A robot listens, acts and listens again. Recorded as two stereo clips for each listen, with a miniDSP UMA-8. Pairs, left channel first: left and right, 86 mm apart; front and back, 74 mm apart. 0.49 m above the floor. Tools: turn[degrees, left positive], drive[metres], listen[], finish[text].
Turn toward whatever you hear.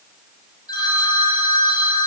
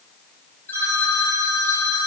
Thought: The phone ringing: 60° left.
Action: turn[60]
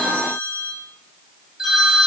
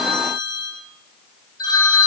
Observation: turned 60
Action: finish[Facing the phone ringing, 1 to 2 m away.]